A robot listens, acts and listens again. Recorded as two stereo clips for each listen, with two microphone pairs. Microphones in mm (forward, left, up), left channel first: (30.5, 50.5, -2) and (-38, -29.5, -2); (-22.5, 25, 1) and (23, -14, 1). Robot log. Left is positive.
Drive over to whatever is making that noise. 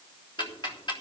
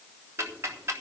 cmd fwd 1.0
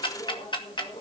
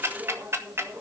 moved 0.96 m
note: The ticking is now 10° left.
cmd yaw +10
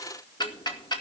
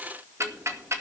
cmd fwd 1.0
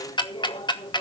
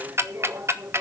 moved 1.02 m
cmd fwd 1.0
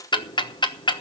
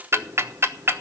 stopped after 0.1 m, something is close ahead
end: I am next to the ticking.